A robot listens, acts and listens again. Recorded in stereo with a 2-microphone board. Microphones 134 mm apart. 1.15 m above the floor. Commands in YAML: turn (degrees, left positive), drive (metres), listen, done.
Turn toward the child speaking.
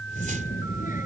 turn: 90
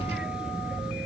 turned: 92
done: "Facing the child speaking."